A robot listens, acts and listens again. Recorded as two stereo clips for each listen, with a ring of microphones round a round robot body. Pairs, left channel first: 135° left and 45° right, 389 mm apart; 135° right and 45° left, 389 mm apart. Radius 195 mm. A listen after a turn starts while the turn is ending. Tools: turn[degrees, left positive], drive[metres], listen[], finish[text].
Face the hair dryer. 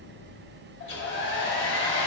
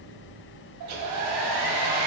Thought: The hair dryer: 80° left.
Action: turn[80]
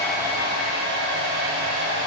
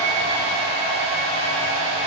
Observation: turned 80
Thought: The hair dryer is now 10° left.
Action: turn[10]
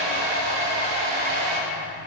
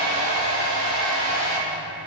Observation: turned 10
Action: finish[Found it: a hair dryer, straight ahead, 1 to 2 m away.]